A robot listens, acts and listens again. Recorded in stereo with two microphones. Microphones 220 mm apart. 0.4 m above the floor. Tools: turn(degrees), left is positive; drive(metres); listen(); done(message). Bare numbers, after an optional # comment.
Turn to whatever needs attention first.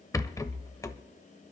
listen()
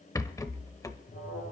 # The alarm: about 60° left or 120° left.
turn(60)
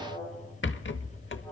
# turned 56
done("Facing the alarm, over 4 m away.")